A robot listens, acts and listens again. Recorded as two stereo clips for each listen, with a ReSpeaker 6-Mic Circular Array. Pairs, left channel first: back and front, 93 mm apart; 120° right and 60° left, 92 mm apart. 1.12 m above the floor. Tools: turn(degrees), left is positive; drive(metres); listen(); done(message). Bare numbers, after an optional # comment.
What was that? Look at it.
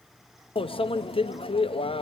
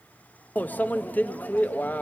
# The microwave: 170° left.
turn(170)
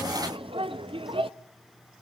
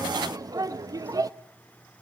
# The microwave is now 10° left.
turn(10)
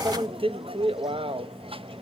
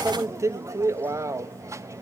done("Found it: a microwave, straight ahead.")